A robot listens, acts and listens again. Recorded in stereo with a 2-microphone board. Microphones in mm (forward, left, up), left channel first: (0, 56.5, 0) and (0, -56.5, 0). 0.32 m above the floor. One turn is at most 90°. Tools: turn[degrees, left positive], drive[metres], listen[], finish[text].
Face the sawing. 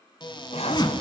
Thought: The sawing: about 60° left or 120° left.
Action: turn[60]
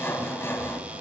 Thought: So it is at 20° left.
Action: turn[20]
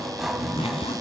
Action: finish[Found it: sawing, straight ahead, 1 to 2 m away.]